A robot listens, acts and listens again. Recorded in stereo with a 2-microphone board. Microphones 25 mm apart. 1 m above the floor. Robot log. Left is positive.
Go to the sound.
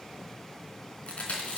note: The chewing: about 55° left or 125° left.
cmd yaw +55
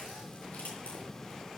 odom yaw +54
cmd idle
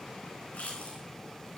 note: So it is at 70° left.
cmd yaw +70
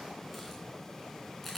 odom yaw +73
cmd fwd 1.0
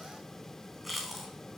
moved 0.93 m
cmd fwd 1.0
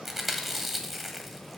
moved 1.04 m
note: The chewing is now 10° right.
cmd yaw -10
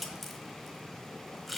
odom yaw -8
cmd fwd 1.0
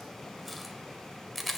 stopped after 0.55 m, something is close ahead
end: Arrived at the chewing, straight ahead.